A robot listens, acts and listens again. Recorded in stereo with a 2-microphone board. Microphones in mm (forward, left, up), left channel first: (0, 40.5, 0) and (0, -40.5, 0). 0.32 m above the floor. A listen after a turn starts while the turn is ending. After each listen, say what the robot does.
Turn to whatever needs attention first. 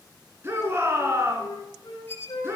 Turn 30° right.
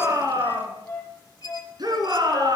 Turn 115° right.
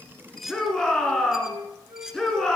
Turn 10° left.
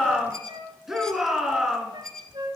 Facing the shout, 2 to 4 m away.